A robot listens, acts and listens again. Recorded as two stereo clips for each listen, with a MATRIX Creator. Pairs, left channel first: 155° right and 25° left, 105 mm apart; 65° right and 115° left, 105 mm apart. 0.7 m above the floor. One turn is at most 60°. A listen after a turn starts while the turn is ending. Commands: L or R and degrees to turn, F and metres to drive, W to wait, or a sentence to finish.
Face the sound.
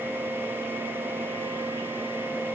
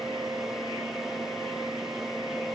W
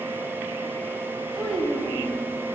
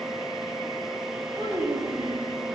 L60
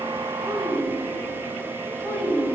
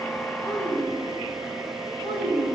L60
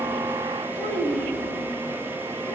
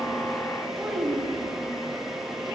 L25
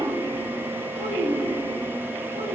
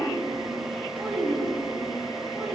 L15
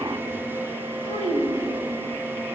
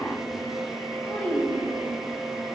Found it: a child speaking, straight ahead.